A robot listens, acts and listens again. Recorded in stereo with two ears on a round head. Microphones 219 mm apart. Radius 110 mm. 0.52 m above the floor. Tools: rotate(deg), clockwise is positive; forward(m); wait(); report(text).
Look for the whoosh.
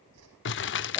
rotate(70)
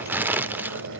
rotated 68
wait()
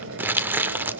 wait()
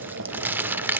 report("I heard a whoosh, but can't make it out now. It was about 5° right or 40° right.")